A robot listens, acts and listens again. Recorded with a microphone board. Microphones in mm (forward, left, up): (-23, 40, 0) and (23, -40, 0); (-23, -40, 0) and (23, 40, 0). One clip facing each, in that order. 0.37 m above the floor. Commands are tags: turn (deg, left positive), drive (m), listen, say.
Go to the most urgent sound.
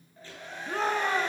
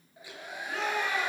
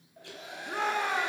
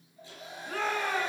<turn deg="170"/>
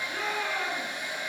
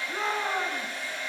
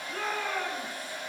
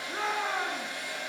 <drive m="1.0"/>
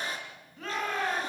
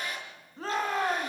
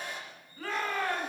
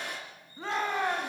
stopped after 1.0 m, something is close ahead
<say>Something is in my way. I am facing the shout but have not reached it.</say>